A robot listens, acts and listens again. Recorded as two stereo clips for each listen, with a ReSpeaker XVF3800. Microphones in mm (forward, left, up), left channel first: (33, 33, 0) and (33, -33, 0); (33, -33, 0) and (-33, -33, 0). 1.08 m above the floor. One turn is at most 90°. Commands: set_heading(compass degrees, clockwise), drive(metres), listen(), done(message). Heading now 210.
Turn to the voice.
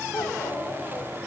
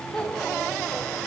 set_heading(135)
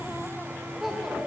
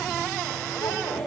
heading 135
done("Facing the child speaking.")